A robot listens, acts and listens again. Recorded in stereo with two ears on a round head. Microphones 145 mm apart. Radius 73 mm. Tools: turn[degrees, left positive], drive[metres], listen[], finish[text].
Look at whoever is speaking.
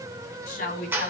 Thought: The woman speaking: about 55° left or 125° left.
Action: turn[55]
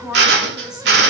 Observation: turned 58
Action: finish[Facing the woman speaking, 2 to 4 m away.]